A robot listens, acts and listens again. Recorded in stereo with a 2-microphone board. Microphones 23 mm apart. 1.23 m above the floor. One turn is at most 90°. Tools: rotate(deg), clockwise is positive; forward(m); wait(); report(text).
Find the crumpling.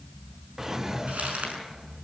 rotate(90)
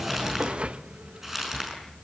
rotate(15)
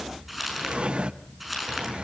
rotate(10)
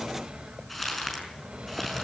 report("Found it: crumpling, straight ahead.")